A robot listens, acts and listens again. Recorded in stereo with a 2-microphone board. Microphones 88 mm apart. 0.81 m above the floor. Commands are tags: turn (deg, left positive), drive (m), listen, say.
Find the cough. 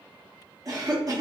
<turn deg="-45"/>
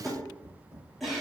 <say>Facing the cough.</say>